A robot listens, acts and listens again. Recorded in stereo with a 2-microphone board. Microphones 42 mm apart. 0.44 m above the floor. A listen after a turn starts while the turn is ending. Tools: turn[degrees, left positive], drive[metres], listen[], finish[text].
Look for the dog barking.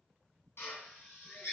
Action: listen[]
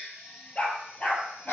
Thought: The dog barking: about 35° left or 145° left.
Action: turn[35]
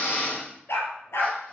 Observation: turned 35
Thought: So it is at 95° left.
Action: turn[95]
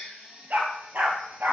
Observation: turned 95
Thought: The dog barking is now 45° right.
Action: turn[-45]
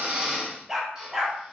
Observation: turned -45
Thought: The dog barking is now 10° right.
Action: turn[-10]
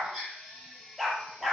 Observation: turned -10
Action: finish[Found it: a dog barking, straight ahead, 2 to 4 m away.]